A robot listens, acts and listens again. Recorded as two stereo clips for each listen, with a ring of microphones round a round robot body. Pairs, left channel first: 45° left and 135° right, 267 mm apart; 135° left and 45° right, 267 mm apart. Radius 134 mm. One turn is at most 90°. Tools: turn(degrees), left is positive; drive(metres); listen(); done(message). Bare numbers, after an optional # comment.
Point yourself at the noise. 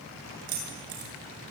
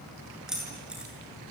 # The keys jangling: 130° right.
turn(-90)
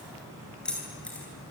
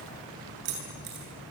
# The keys jangling is now 40° right.
turn(-40)
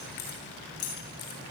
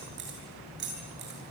done("Facing the keys jangling.")